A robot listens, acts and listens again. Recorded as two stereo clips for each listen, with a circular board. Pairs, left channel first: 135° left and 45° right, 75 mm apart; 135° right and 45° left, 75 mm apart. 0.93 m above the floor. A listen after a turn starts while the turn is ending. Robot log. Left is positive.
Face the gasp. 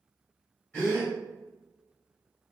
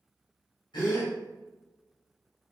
note: The gasp: 150° right.
cmd yaw -150
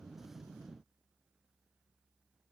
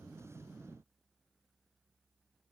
end: Facing where the gasp came from. I can't hear it now.